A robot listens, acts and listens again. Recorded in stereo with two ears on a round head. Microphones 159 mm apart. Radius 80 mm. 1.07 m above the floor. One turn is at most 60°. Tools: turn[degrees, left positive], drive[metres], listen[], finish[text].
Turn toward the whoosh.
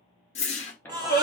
Thought: The whoosh: about 35° left or 145° left.
Action: turn[35]
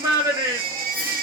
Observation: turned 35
Action: listen[]
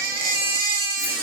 Action: listen[]
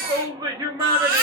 Action: finish[I heard a whoosh, but can't make it out now. It was about straight ahead or 110° left.]